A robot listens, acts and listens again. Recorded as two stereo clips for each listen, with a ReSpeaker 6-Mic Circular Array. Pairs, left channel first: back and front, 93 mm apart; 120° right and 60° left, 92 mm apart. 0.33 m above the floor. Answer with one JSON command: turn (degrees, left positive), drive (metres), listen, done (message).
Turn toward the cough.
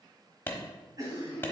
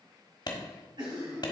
{"turn": 40}
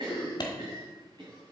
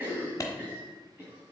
{"done": "Facing the cough, 1 to 2 m away."}